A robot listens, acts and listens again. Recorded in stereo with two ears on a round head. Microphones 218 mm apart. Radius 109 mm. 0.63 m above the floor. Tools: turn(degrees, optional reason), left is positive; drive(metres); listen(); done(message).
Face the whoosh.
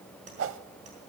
turn(degrees=-55, reason="The whoosh: about 55° right or 125° right.")
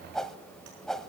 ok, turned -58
done("Found it: a whoosh, straight ahead, under 1 m away.")